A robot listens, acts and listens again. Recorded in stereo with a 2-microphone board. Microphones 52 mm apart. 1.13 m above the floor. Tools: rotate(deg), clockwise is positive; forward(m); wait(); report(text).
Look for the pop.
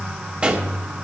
rotate(25)
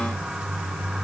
wait()
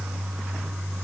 report("I heard a pop, but can't make it out now. It was about straight ahead or 130° right.")